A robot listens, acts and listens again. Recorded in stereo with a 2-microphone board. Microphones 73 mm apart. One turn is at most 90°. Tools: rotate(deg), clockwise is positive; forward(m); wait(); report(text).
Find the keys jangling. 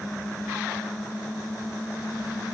wait()
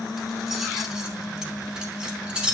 rotate(30)
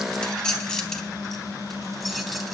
report("Facing the keys jangling, 2 to 4 m away.")